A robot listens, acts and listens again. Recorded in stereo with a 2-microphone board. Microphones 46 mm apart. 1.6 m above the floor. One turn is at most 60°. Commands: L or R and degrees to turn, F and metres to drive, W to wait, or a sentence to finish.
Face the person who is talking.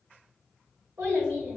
R60
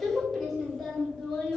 L15
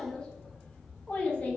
L35
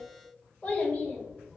L20
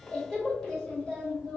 Found it: a child speaking, straight ahead.